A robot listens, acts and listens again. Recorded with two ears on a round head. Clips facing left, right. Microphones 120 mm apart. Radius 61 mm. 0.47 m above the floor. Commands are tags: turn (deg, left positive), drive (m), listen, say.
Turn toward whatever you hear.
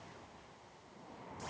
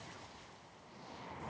<listen/>
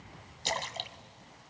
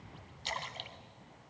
<turn deg="55"/>
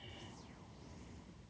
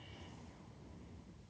<listen/>
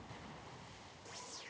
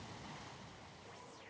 <say>I heard a splash, but can't make it out now. It was about straight ahead or 70° left.</say>